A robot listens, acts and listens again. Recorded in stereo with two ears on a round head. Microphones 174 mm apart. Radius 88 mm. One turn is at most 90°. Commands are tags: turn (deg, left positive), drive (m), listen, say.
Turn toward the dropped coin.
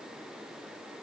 <listen/>
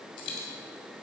<turn deg="60"/>
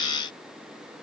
<listen/>
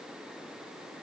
<say>I heard a dropped coin, but can't make it out now. It was about straight ahead or 60° left.</say>